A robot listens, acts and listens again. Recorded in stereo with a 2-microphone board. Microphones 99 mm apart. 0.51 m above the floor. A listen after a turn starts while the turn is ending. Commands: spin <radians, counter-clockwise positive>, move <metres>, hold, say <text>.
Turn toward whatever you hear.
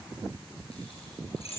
spin 1.57
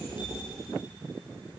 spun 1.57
hold
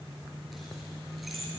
say Facing the keys jangling, over 4 m away.